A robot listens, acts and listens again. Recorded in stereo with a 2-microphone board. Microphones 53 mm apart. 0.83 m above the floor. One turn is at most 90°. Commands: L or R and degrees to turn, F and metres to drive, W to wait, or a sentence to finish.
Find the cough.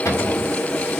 W
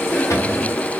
W
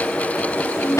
L65
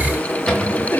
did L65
W
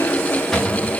W
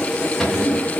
I heard a cough, but can't make it out now. It was about straight ahead or 50° left.